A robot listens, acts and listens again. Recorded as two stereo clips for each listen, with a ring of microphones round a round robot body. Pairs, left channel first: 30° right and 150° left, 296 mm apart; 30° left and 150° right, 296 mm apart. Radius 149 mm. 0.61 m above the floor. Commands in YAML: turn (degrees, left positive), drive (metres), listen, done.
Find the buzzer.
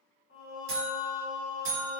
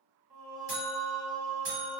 turn: 170
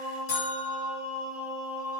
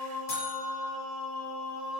done: "Facing the buzzer."